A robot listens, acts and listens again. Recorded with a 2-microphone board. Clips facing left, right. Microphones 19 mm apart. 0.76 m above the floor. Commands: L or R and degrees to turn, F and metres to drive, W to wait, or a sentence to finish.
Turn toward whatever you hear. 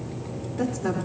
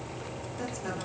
L30
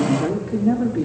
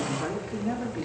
L10
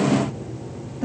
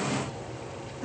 L20
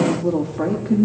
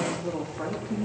L35
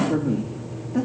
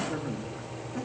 L30
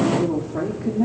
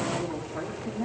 L10
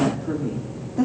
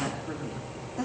Facing the woman speaking.